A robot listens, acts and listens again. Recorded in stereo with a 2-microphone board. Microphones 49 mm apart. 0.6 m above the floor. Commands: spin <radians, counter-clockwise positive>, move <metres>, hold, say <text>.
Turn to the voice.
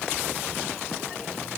hold
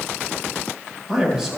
spin -0.52
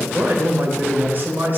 spin -2.36
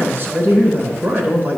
spin -0.87
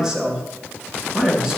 spin -0.26
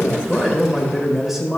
say Found it: a man speaking, straight ahead, 2 to 4 m away.